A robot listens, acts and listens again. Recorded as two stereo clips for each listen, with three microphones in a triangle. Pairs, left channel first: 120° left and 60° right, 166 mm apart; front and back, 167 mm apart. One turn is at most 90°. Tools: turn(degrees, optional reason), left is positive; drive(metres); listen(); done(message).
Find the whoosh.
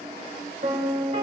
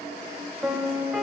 listen()
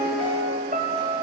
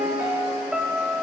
listen()
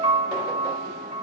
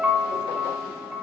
done("I can't make out a whoosh to turn to.")